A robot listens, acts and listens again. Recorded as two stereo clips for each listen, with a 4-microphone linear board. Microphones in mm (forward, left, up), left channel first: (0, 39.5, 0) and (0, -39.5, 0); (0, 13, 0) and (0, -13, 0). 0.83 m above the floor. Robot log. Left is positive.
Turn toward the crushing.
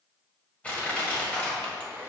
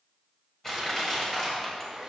note: The crushing: about 15° left or 165° left.
cmd yaw +15
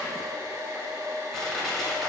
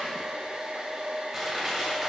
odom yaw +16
end: Found it: crushing, straight ahead, 1 to 2 m away.